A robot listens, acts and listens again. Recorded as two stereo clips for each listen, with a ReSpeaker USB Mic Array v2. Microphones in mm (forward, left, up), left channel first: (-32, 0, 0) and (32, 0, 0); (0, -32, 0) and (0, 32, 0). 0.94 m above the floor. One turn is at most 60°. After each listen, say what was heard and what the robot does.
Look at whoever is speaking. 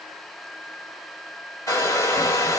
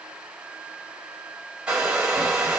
Keep listening.
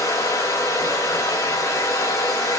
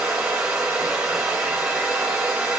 Keep listening.
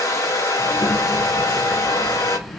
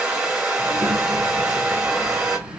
The child speaking: 155° right. Turn 60° right.
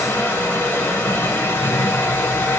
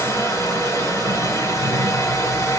The child speaking is now 75° right. Turn 60° right.
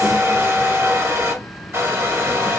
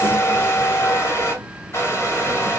Found it: a child speaking, straight ahead, 2 to 4 m away.